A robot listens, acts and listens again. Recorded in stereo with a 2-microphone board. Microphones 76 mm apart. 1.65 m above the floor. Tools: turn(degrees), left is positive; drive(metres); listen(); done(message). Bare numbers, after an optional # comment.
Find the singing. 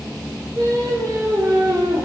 # The singing: about 45° right or 135° right.
turn(-45)
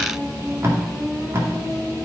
# So it is at 15° left.
turn(15)
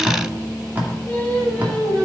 # The singing is now 15° left.
turn(15)
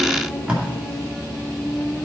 # The singing is now 10° left.
turn(10)
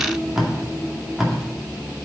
listen()
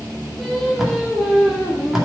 done("Facing the singing.")